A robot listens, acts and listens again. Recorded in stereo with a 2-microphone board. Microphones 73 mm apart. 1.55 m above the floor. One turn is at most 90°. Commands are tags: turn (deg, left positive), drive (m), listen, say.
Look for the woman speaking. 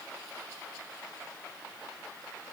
<listen/>
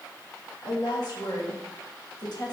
<turn deg="65"/>
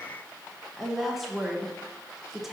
<say>Facing the woman speaking.</say>